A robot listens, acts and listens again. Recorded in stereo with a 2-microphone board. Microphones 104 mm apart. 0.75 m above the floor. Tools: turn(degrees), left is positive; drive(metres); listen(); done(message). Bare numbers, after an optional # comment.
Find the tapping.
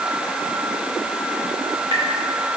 # The tapping: about 55° right or 125° right.
turn(-55)
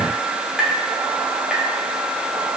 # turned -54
done("Facing the tapping.")